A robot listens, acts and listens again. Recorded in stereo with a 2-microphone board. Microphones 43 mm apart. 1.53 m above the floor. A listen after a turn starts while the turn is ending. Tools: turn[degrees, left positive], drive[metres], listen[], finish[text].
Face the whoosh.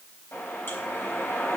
Thought: The whoosh: about 55° left or 125° left.
Action: turn[55]
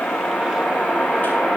Action: finish[Found it: a whoosh, straight ahead, over 4 m away.]